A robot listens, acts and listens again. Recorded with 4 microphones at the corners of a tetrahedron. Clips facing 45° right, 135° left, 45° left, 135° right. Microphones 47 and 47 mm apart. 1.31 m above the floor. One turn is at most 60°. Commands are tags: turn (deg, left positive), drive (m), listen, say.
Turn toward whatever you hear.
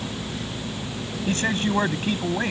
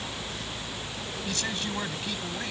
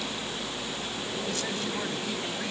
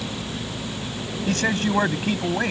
<turn deg="-60"/>
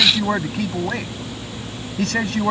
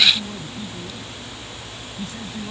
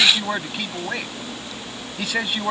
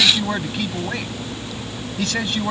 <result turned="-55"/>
<turn deg="-35"/>
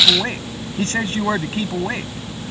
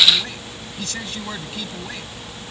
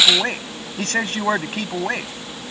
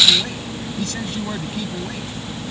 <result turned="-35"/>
<turn deg="10"/>
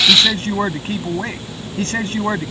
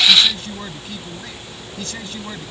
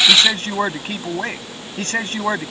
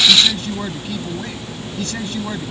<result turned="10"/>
<say>Facing the man speaking.</say>